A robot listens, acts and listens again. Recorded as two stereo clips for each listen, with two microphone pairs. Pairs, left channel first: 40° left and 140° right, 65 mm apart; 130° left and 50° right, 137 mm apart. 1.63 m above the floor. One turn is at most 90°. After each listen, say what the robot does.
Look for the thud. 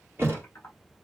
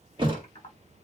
Turn 90° right.
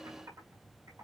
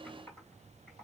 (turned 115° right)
Turn 20° left.
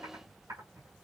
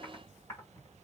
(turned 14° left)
I heard a thud from this way, but can't make it out now.